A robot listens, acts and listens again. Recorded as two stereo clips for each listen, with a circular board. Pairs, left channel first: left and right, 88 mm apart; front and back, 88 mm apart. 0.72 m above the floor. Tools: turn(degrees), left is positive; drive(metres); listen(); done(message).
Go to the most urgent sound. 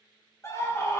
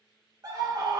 turn(degrees=145)
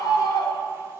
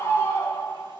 turn(degrees=50)
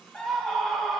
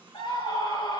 drive(metres=1.0)
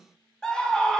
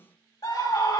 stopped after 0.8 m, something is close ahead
turn(degrees=10)
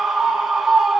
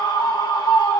done("Arrived at the scream, straight ahead.")